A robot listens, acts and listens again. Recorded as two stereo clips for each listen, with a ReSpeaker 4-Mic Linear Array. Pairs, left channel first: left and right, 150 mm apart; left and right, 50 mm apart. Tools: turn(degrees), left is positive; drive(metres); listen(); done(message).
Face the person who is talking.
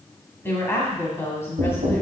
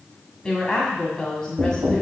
turn(degrees=15)
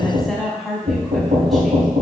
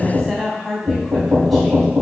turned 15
done("Found it: a woman speaking, straight ahead.")